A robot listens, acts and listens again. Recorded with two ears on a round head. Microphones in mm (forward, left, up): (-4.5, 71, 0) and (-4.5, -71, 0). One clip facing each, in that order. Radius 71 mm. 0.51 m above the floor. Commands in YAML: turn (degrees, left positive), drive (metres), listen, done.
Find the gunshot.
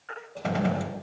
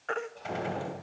turn: 70
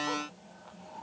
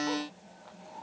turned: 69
listen: true
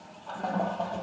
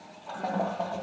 done: "I heard a gunshot, but can't make it out now. It was about straight ahead or 45° left."